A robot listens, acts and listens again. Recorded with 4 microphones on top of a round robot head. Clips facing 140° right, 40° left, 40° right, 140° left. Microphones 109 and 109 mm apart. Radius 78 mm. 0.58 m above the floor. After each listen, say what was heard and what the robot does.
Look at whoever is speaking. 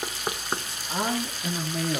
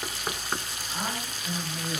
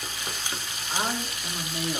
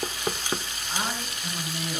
The man speaking: 120° right. Turn 120° right.
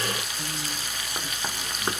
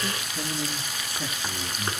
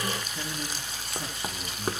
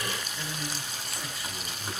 Keep listening.
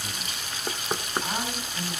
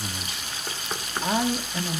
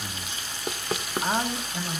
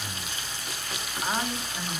The man speaking is now 30° left. Turn 30° left.
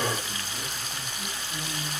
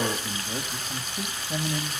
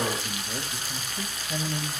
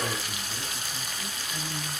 Facing the man speaking.